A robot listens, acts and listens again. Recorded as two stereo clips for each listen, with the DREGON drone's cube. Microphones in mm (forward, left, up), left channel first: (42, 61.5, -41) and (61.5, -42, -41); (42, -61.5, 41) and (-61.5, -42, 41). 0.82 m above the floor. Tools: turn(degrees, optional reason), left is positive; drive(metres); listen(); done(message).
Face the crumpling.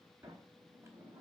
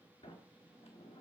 listen()
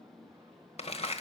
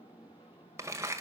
turn(degrees=110, reason="The crumpling: 110° left.")
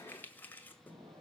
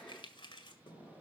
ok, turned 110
turn(degrees=30, reason="The crumpling is now 30° left.")
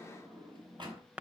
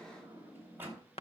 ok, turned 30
done("Found it: crumpling, straight ahead.")